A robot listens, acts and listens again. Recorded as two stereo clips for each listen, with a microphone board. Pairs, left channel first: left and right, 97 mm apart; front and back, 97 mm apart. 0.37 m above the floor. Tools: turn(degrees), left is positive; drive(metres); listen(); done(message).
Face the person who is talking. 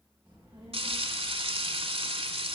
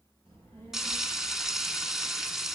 turn(degrees=-155)
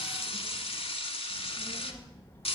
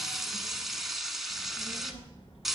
turn(degrees=20)
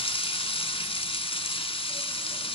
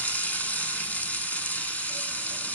listen()
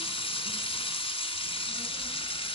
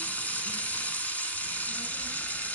listen()
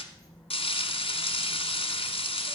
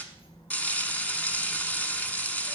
done("Found it: a child speaking, straight ahead, 2 to 4 m away.")